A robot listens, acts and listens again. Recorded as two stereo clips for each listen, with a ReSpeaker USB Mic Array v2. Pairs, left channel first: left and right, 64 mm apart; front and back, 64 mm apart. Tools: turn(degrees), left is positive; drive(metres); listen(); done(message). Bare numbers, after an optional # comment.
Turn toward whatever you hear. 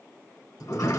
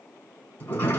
# The sliding door: 60° left.
turn(60)
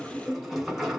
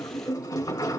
done("Facing the sliding door.")